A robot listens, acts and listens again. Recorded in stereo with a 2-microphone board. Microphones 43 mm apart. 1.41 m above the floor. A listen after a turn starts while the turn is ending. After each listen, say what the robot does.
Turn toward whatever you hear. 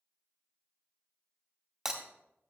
Turn 30° right.
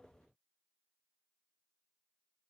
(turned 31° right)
Keep listening.
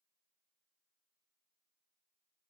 I heard breaking glass, but can't make it out now. It was about 30° left or 145° right.